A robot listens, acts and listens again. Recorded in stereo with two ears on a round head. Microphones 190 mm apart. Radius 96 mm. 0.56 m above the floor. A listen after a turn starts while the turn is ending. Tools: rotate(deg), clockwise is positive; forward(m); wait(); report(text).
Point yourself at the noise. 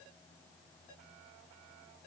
wait()
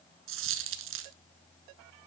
rotate(65)
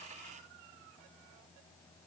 wait()
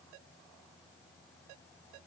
report("I heard a dropped coin, but can't make it out now. It was about straight ahead or 50° right.")